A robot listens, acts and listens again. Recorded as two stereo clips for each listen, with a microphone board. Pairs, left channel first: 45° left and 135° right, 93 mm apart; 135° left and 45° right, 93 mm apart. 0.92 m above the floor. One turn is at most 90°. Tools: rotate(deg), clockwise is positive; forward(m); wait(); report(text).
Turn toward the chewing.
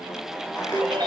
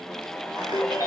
wait()
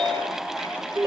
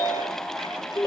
wait()
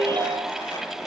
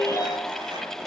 report("I can't make out chewing to turn to.")